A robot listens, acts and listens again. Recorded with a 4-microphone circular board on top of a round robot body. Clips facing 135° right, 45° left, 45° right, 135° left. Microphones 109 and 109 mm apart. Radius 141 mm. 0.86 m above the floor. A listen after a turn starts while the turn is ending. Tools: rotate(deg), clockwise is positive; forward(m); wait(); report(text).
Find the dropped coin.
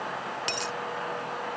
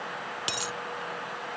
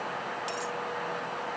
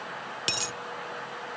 rotate(-125)
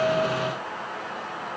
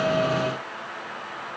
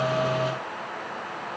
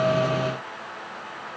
report("I heard a dropped coin from this way, but can't make it out now.")